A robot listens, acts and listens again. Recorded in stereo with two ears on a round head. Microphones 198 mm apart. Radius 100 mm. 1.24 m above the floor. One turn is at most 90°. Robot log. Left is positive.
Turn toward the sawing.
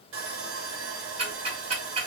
note: The sawing: about 60° right or 120° right.
cmd yaw -60
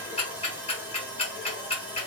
note: So it is at 10° right.
cmd yaw -10
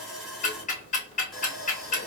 end: Facing the sawing, under 1 m away.